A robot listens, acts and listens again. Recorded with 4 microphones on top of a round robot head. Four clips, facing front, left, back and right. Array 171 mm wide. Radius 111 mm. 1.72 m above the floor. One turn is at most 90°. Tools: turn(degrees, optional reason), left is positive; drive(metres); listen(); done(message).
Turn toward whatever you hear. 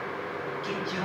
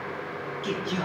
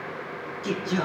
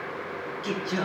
turn(degrees=90, reason="The singing: 155° left.")
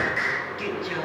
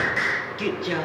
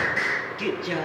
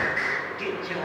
turn(degrees=90, reason="The singing is now 95° left.")
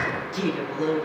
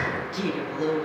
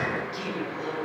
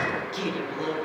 turn(degrees=-20, reason="The singing is now 20° right.")
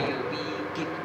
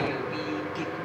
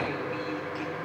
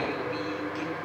done("Facing the singing, over 4 m away.")